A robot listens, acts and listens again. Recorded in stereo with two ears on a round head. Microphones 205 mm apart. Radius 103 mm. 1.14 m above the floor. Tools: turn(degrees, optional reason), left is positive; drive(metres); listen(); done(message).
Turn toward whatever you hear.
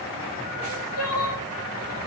turn(degrees=90)
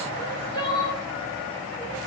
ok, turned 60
turn(degrees=20, reason="So it is at 20° left.")
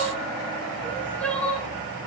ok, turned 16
done("Facing the crying, 1 to 2 m away.")